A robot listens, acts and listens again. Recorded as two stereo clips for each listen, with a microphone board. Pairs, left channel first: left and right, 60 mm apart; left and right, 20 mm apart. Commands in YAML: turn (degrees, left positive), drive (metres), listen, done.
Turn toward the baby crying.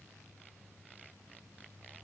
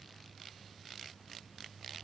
listen: true
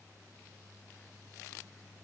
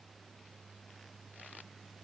listen: true
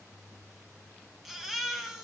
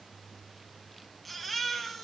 turn: -30
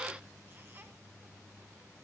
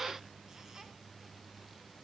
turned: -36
listen: true
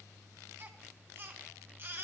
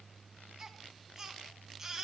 turn: -140
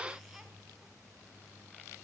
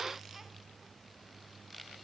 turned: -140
listen: true
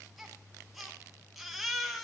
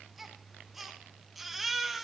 done: "Found it: a baby crying, straight ahead, 1 to 2 m away."